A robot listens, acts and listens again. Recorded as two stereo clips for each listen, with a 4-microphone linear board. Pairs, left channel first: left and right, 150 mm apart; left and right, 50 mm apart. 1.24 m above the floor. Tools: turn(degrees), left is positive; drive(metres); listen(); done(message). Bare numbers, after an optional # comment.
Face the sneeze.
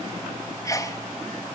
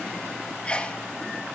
# The sneeze: about 20° left or 160° left.
turn(20)
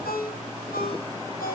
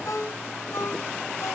listen()
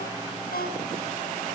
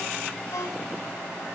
done("I heard a sneeze, but can't make it out now. It was about straight ahead or 140° left.")